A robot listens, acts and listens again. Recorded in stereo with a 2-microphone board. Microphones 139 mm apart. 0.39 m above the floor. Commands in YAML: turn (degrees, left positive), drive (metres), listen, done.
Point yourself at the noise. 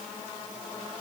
listen: true
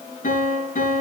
turn: 70
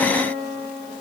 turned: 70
turn: 35
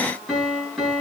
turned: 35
done: "Found it: a piano, straight ahead, over 4 m away."